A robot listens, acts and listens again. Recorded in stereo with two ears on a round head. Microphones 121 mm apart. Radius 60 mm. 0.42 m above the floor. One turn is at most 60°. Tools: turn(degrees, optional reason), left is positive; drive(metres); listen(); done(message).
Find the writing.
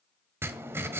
turn(degrees=-20, reason="The writing: about 20° right or 160° right.")
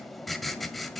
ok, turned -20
done("Facing the writing, 1 to 2 m away.")